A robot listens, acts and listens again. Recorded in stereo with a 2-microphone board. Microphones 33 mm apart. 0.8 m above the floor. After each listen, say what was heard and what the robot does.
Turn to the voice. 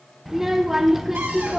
Turn 30° right.
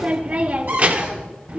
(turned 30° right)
So it is at 145° right. Turn 145° right.
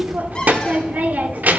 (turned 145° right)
The child speaking is now 55° right. Turn 55° right.
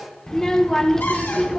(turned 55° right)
The child speaking is now 15° left. Turn 15° left.
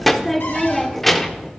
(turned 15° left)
Facing the child speaking.